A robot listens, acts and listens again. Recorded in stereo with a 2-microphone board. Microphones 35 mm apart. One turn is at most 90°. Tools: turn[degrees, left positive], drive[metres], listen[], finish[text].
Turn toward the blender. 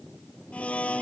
Thought: The blender: about 40° left or 140° left.
Action: turn[40]
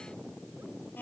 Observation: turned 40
Thought: So it is at 95° left.
Action: turn[90]
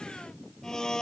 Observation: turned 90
Thought: The blender is now 20° left.
Action: turn[20]
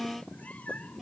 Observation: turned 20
Action: finish[Facing the blender.]